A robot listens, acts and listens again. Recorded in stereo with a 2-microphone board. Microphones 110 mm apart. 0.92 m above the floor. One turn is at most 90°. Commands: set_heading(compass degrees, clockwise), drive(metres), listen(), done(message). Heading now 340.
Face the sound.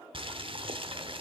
set_heading(30)
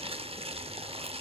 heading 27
set_heading(102)
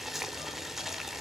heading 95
done("Facing the boiling, under 1 m away.")